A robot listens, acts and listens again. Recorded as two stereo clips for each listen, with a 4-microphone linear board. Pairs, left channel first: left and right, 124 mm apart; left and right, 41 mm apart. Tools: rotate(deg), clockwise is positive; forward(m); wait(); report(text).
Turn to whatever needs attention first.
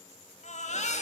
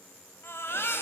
rotate(-65)
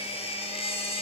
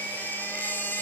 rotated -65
rotate(-50)
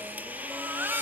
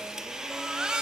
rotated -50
rotate(15)
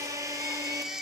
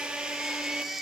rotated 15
report("Found it: a baby crying, straight ahead.")